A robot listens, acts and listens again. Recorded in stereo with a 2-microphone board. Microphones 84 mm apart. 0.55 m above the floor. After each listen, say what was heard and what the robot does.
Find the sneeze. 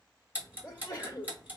The sneeze: about 30° left or 150° left. Turn 30° left.
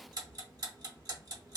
Keep listening.
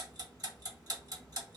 I heard a sneeze, but can't make it out now. It was about straight ahead or 120° left.